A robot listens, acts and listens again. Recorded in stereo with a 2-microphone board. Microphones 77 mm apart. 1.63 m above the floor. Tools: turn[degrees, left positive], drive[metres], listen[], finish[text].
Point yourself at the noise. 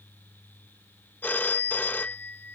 Thought: The phone ringing: about 25° left or 155° left.
Action: turn[25]
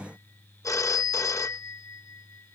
Thought: So it is at 130° left.
Action: turn[130]
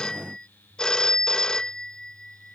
Thought: The phone ringing is now 10° left.
Action: turn[10]
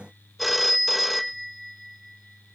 Action: finish[Facing the phone ringing.]